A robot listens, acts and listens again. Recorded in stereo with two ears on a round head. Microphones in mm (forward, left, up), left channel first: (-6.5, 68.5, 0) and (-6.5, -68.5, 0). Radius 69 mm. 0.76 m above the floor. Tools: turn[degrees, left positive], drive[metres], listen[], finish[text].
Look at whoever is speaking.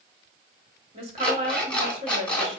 Thought: The woman speaking: about 35° right or 145° right.
Action: turn[-35]
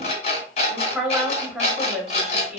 Action: finish[Found it: a woman speaking, straight ahead, 2 to 4 m away.]